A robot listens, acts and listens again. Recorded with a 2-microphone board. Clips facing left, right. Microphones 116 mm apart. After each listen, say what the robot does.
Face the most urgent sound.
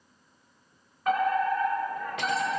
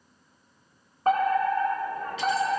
Turn 35° right.
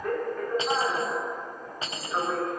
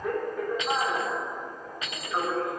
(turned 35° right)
Facing the fire alarm.